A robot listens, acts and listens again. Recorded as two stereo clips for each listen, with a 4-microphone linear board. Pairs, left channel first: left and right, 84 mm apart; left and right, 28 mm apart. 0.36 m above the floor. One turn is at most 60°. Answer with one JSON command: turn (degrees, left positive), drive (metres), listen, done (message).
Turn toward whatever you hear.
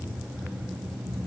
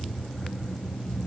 {"listen": true}
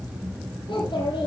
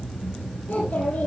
{"turn": 60}
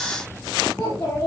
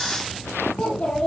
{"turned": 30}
{"turn": 25}
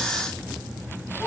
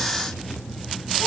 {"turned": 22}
{"listen": true}
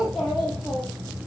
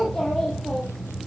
{"done": "Found it: a child speaking, straight ahead."}